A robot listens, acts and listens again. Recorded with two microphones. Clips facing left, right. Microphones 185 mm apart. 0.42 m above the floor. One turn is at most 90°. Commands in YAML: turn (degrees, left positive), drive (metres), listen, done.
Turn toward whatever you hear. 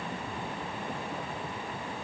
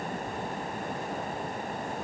listen: true
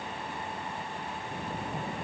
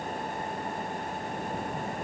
listen: true
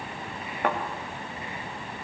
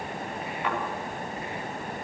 turn: 55
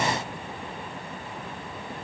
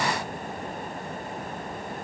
listen: true
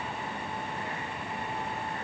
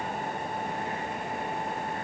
done: "I heard a thud, but can't make it out now. It was about straight ahead or 70° left."